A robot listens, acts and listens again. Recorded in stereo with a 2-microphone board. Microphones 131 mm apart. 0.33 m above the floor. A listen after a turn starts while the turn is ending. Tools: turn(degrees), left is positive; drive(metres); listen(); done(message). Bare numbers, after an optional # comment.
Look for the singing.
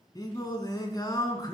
# The singing: about 30° left or 150° left.
turn(30)
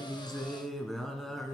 done("Facing the singing, 2 to 4 m away.")